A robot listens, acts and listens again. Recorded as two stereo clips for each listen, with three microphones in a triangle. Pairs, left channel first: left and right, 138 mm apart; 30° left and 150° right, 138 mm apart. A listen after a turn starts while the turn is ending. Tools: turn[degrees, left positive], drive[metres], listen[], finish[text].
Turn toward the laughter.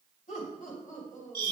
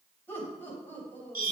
Thought: The laughter: 105° left.
Action: turn[105]
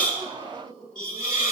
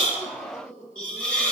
Action: finish[Facing the laughter, over 4 m away.]